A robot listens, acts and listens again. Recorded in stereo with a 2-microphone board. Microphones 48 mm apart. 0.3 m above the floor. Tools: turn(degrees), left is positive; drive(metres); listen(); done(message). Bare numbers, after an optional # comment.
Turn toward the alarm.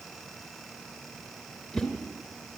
listen()
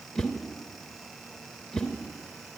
listen()
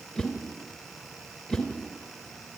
done("I can't make out an alarm, only a whoosh.")